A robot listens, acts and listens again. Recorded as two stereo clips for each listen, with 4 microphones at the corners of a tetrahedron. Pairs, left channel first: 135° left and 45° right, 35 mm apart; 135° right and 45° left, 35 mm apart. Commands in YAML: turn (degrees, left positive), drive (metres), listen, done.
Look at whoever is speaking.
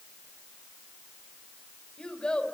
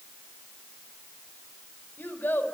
turn: -160
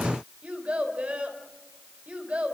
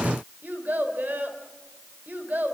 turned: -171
turn: 10
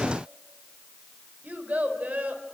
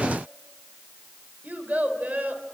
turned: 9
done: "Found it: a child speaking, straight ahead, over 4 m away."